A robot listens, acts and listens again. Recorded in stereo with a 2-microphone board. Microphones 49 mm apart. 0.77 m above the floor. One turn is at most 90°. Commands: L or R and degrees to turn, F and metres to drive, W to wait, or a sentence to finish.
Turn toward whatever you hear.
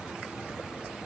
W
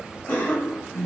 L40
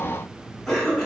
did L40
Found it: a cough, straight ahead.